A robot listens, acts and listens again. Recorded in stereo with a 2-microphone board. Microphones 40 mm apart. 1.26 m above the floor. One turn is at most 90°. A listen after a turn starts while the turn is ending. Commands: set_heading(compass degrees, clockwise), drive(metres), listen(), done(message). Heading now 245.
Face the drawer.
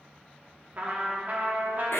listen()
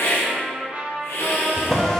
set_heading(215)
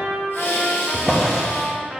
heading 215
set_heading(230)
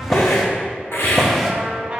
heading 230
done("Facing the drawer.")